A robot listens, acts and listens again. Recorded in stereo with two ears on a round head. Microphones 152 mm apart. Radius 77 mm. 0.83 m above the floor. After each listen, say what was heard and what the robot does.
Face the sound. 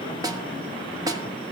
The snare drum: about 25° right or 155° right. Turn 25° right.
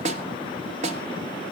So it is at 130° right. Turn 130° right.
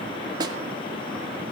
The snare drum is now 30° right. Turn 30° right.
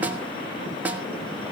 The snare drum is now 10° right. Turn 10° right.
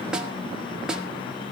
Facing the snare drum.